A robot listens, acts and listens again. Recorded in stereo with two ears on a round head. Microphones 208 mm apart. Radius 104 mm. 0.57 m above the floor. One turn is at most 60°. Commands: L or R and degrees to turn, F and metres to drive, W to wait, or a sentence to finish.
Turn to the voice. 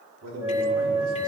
R60
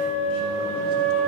R30
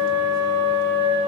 W
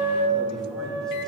Facing where the man speaking came from. I can't hear it now.